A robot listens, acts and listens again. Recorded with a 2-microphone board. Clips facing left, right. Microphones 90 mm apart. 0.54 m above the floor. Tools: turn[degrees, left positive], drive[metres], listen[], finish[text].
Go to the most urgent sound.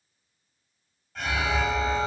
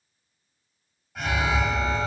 Action: turn[-30]
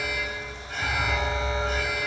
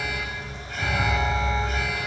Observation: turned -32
Thought: So it is at 20° left.
Action: turn[20]
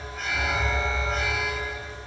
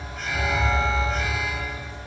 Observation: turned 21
Action: drive[1.0]
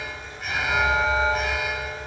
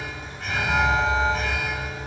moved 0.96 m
Action: drive[1.0]
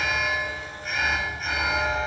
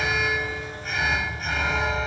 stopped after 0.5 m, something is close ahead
Action: finish[I am next to the alarm.]